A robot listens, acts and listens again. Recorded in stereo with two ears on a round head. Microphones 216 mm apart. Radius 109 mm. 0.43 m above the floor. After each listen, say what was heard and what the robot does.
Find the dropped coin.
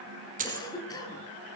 The dropped coin: about 30° right or 150° right. Turn 30° right.
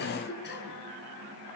Keep listening.
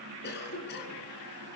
I heard a dropped coin, but can't make it out now. It was about straight ahead or 120° right.